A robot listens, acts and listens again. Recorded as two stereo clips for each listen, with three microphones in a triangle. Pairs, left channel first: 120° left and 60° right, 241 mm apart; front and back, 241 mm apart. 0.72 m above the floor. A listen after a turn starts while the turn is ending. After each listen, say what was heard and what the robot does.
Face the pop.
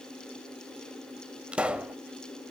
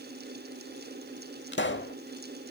The pop: 25° left. Turn 25° left.
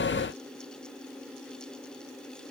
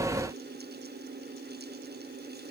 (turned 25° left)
I heard a pop from this way, but can't make it out now.